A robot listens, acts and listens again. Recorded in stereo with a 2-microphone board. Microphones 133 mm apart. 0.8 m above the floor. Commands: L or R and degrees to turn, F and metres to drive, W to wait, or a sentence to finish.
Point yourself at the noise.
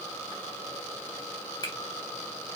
L30
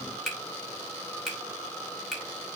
Found it: a finger snap, straight ahead.